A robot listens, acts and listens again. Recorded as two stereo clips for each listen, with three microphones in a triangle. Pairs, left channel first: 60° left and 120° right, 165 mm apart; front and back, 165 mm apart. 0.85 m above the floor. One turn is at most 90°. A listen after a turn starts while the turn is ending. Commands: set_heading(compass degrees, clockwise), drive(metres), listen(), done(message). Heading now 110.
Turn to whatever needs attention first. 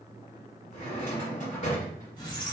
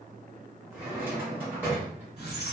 listen()
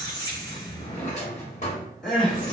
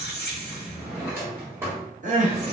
set_heading(20)
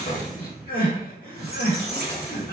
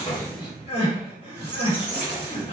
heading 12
set_heading(322)
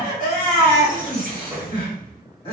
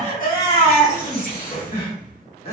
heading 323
done("Facing the crying, 1 to 2 m away.")